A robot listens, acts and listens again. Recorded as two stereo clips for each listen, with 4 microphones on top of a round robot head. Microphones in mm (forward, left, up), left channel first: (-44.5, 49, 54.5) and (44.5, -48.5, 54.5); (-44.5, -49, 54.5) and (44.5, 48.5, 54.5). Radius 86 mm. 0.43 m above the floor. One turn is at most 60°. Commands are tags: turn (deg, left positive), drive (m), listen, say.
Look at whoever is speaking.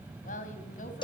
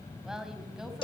<turn deg="60"/>
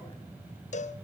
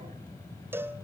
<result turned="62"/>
<turn deg="60"/>
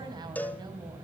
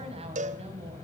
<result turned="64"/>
<turn deg="10"/>
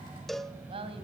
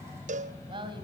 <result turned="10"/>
<say>Found it: a woman speaking, straight ahead.</say>